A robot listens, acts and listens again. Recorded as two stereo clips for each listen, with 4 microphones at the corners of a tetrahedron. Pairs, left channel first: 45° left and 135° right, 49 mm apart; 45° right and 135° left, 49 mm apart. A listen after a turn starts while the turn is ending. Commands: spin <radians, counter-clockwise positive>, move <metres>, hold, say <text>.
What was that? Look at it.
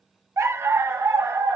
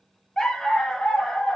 spin -2.18
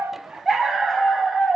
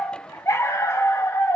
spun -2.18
spin -0.79
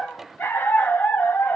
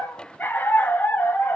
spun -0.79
say Facing the dog barking.